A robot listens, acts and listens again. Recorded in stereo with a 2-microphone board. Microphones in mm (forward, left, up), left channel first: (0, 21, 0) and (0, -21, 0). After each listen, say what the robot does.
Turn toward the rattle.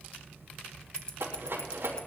Turn 75° right.
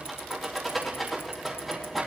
Found it: a rattle, straight ahead, over 4 m away.